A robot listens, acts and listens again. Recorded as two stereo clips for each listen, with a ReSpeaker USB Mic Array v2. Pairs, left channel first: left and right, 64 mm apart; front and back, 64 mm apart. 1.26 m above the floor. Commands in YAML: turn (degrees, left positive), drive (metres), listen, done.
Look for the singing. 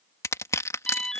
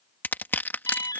listen: true
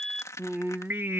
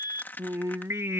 turn: -135
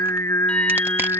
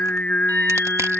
turn: 80
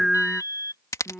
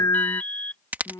done: "Facing the singing."